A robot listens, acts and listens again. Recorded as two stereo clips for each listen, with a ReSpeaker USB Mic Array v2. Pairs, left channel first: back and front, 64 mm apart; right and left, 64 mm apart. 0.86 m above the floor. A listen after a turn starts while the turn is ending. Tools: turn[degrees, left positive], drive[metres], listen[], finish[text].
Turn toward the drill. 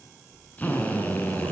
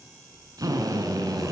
Thought: The drill: 115° left.
Action: turn[115]
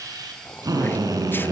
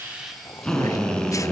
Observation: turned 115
Thought: The drill is now 10° right.
Action: turn[-10]
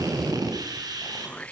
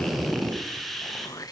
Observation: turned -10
Action: finish[Found it: a drill, straight ahead.]